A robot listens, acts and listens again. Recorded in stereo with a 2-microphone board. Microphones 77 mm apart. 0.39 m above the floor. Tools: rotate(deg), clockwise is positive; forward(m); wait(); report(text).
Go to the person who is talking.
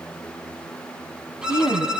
rotate(-50)
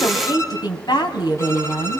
rotate(-75)
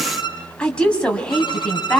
rotate(-15)
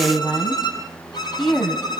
forward(1.0)
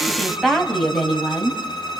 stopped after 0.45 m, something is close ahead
report("Blocked. The woman speaking is further on, straight ahead.")